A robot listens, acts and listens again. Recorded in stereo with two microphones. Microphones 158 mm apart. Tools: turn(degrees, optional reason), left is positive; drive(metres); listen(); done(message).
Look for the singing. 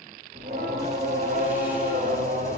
turn(degrees=-65, reason="The singing: about 65° right or 115° right.")
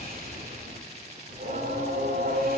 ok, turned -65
turn(degrees=-85, reason="So it is at 85° right.")
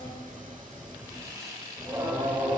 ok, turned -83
turn(degrees=-15, reason="The singing is now 15° right.")
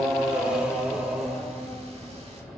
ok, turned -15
done("Facing the singing, 2 to 4 m away.")